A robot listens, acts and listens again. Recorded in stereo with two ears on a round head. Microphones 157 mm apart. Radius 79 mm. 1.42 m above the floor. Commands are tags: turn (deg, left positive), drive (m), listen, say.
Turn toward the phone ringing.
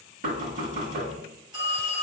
<turn deg="-25"/>
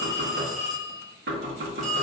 <say>Found it: a phone ringing, straight ahead, 1 to 2 m away.</say>